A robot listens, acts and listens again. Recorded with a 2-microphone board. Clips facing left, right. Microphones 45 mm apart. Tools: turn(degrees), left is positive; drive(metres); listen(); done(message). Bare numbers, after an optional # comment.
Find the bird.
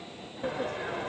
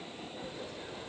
listen()
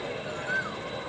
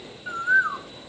# The bird: about 45° right or 135° right.
turn(-45)
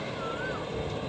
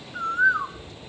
# So it is at 90° right.
turn(-90)
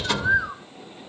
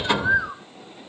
done("Found it: a bird, straight ahead.")